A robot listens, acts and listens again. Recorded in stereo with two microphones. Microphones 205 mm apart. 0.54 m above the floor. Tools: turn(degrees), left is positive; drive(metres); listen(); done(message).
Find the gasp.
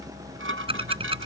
listen()
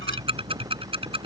listen()
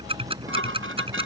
done("I can't make out a gasp, only ticking and dishes clattering.")